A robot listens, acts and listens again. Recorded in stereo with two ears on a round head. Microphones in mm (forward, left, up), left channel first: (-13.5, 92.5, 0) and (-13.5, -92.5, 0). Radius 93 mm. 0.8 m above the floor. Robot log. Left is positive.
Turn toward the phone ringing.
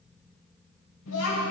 cmd idle
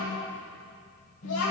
cmd idle
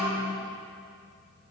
end: I can't make out a phone ringing to turn to.